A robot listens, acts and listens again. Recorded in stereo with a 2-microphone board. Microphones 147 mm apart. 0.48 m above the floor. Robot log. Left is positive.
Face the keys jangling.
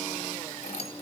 note: The keys jangling: about 45° left or 135° left.
cmd yaw +45
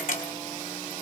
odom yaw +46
note: So it is at 110° left.
cmd yaw +110
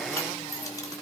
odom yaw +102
note: The keys jangling is now 20° left.
cmd yaw +20
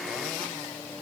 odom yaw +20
cmd idle
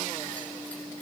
cmd idle
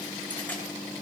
end: I heard keys jangling from this way, but can't make it out now.